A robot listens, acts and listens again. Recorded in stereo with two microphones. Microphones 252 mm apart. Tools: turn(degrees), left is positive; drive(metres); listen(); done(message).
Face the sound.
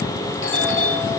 turn(degrees=50)
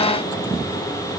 listen()
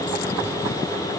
listen()
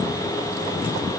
done("I heard a doorbell, but can't make it out now. It was about straight ahead or 80° left.")